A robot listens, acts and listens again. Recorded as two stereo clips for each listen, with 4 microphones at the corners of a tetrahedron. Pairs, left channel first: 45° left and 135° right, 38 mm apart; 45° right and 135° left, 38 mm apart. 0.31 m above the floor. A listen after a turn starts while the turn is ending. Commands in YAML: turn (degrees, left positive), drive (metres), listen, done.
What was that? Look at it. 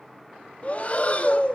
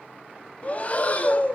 done: "Found it: breathing, straight ahead."